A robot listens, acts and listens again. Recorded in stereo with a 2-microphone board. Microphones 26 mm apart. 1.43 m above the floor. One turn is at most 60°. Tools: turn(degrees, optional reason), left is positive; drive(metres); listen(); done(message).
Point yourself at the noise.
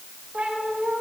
turn(degrees=-60, reason="The cat meowing: about 65° right or 115° right.")
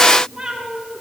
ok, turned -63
turn(degrees=-15, reason="So it is at 15° right.")
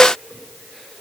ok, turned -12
listen()
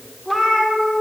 turn(degrees=20, reason="The cat meowing is now 20° left.")
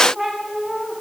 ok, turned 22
turn(degrees=15, reason="The cat meowing is now 15° left.")
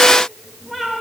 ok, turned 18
turn(degrees=10, reason="The cat meowing is now 10° left.")
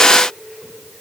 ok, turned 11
listen()
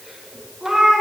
done("Found it: a cat meowing, straight ahead, 2 to 4 m away.")